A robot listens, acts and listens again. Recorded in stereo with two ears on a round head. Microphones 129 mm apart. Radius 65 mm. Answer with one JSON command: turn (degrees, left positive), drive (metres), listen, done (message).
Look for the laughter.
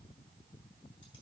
{"listen": true}
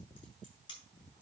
{"listen": true}
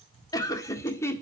{"turn": 20}
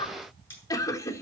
{"turn": 20}
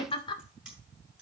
{"turn": 35}
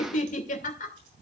{"turn": 120}
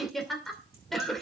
{"done": "Facing the laughter, 2 to 4 m away."}